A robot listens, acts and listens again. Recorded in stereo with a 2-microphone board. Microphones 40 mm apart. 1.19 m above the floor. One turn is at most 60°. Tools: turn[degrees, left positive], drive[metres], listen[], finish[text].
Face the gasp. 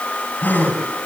Thought: The gasp: about 50° left or 130° left.
Action: turn[50]
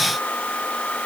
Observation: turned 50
Action: listen[]
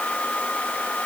Action: finish[I heard a gasp, but can't make it out now. It was about straight ahead or 80° left.]